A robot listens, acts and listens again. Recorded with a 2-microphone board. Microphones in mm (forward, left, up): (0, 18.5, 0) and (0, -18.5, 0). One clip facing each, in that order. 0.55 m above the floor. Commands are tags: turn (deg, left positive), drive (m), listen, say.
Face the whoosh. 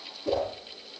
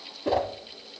<turn deg="-60"/>
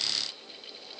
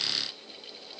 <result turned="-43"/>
<listen/>
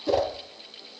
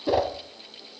<turn deg="-15"/>
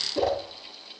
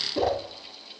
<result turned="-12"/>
<say>Facing the whoosh.</say>